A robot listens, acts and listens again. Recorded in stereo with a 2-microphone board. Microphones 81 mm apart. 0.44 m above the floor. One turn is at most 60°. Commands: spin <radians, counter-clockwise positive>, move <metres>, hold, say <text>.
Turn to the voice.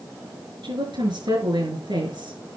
spin -1.05
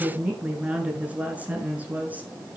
spin -0.35
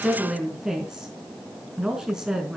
spin -0.17
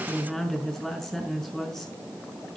say Found it: a woman speaking, straight ahead.